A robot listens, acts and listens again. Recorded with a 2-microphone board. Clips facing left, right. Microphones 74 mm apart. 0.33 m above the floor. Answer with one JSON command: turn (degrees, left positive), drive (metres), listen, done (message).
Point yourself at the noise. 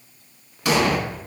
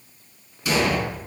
{"turn": 75}
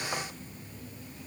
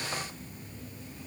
{"listen": true}
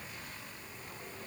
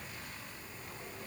{"done": "I heard an explosion, but can't make it out now. It was about straight ahead or 30° left."}